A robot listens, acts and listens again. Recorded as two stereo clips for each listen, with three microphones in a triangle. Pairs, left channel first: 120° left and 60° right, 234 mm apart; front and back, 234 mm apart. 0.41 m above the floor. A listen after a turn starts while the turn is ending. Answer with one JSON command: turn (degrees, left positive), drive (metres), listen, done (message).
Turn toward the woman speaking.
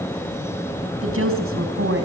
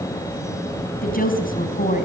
{"turn": -50}
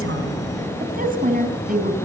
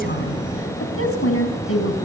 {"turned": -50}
{"turn": -10}
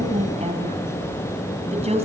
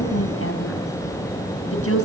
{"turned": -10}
{"done": "Facing the woman speaking."}